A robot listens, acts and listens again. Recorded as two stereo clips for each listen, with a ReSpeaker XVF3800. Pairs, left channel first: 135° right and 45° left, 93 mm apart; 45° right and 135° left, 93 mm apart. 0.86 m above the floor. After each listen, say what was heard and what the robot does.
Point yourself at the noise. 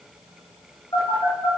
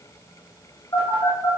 The phone buzzing: 95° right. Turn 95° right.
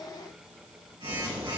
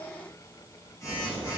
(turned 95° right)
The phone buzzing is now 10° left. Turn 10° left.
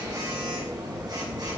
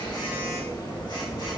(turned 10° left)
Found it: a phone buzzing, straight ahead.